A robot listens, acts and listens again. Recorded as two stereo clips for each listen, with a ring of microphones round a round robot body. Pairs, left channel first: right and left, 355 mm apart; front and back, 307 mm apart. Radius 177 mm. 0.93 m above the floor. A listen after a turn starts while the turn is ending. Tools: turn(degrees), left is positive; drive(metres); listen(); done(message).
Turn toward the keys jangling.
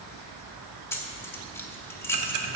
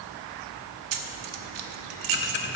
turn(degrees=-175)
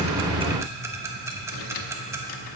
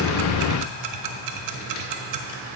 listen()
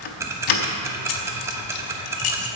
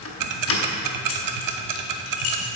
turn(degrees=-55)
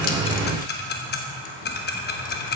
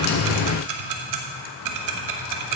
listen()
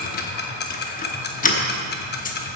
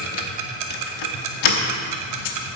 turn(degrees=-20)
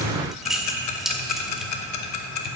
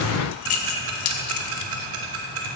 done("Found it: keys jangling, straight ahead.")